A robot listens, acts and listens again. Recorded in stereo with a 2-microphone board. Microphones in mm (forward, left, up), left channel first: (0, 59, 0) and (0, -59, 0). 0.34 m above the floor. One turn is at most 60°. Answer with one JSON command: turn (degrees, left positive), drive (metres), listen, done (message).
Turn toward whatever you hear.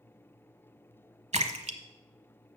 {"turn": -60}
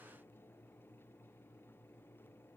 {"listen": true}
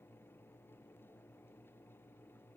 {"done": "I heard a splash, but can't make it out now. It was about 15° right or 45° right."}